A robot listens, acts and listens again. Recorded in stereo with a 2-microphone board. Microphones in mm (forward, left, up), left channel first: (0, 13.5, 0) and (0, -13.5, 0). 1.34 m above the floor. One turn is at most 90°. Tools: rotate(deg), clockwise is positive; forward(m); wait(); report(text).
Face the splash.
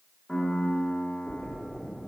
rotate(30)
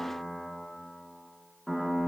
wait()
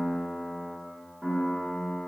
report("I heard a splash, but can't make it out now. It was about 20° left or 140° right.")